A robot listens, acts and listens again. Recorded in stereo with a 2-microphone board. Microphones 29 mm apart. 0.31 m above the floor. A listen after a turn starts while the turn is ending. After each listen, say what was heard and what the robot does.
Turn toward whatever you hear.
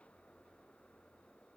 Keep listening.
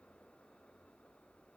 Keep listening.
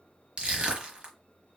The crushing: about 35° right or 145° right. Turn 35° right.
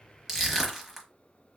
Facing the crushing, 1 to 2 m away.